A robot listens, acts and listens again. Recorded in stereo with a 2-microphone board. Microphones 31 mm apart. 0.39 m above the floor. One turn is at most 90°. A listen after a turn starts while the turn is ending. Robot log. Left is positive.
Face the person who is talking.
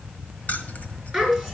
cmd yaw +30
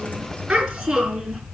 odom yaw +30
note: So it is at 15° right.
cmd yaw -15
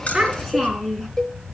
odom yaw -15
end: Facing the child speaking, 2 to 4 m away.